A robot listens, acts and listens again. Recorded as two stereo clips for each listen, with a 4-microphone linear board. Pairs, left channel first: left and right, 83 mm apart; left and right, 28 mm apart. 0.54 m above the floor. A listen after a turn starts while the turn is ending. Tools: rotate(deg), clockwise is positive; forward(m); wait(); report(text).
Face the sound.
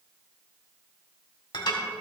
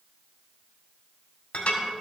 rotate(-70)
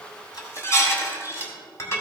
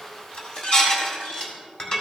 rotate(-35)
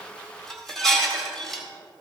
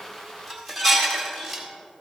report("Found it: dishes clattering, straight ahead.")